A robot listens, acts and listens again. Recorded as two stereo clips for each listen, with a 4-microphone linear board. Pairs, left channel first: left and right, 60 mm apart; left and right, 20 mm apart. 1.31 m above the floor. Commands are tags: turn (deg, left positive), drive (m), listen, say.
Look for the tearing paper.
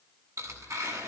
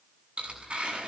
<turn deg="-60"/>
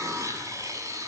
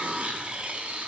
<turn deg="-60"/>
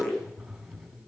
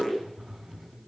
<say>Found it: tearing paper, straight ahead.</say>